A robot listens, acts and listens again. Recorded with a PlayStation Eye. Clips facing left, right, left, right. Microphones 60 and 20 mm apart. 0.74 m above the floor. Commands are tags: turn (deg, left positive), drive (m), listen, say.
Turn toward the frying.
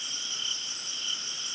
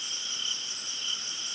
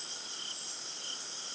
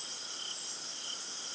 <listen/>
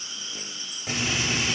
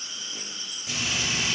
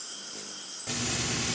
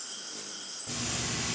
<turn deg="50"/>
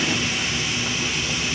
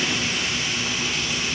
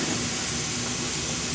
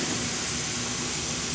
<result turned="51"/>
<say>Facing the frying.</say>